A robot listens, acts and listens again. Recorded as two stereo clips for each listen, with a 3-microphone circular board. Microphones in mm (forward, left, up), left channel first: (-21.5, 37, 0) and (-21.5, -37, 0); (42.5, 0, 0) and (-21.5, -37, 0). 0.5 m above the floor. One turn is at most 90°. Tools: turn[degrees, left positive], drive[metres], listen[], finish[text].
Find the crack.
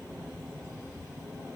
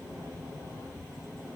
Action: listen[]
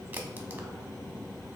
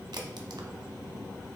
Thought: The crack: 155° right.
Action: turn[-90]
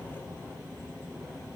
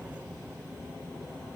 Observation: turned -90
Thought: Nothing new. It was at 65° right.
Action: turn[-65]
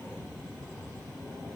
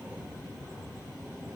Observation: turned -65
Action: finish[I heard a crack from this way, but can't make it out now.]